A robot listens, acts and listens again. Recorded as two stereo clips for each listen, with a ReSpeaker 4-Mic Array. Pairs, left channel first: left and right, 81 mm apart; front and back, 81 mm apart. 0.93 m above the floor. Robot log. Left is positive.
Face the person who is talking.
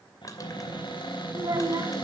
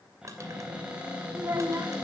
note: The child speaking: 130° right.
cmd yaw -130
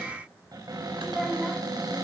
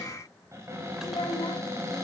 end: Found it: a child speaking, straight ahead, 2 to 4 m away.